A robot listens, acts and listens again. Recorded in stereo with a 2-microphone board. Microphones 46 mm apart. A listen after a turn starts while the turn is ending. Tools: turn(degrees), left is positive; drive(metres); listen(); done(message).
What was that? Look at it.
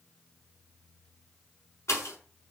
turn(degrees=90)
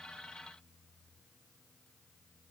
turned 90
done("Facing where the pop came from. I can't hear it now.")